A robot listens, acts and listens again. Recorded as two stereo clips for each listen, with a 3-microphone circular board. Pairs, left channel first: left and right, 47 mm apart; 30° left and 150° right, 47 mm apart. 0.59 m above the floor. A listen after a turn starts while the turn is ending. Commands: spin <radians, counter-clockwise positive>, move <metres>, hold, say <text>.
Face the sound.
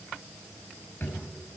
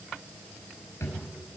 spin 0.79
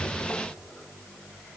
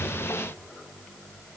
hold
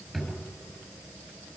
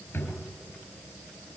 say Facing the drawer, over 4 m away.